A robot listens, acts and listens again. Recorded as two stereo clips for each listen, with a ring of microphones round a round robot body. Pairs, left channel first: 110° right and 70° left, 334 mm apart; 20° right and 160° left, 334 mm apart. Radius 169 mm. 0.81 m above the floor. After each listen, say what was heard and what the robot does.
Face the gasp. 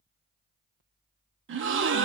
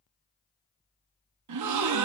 The gasp: 120° left. Turn 120° left.
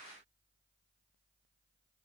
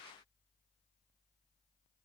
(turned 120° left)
I heard a gasp from this way, but can't make it out now.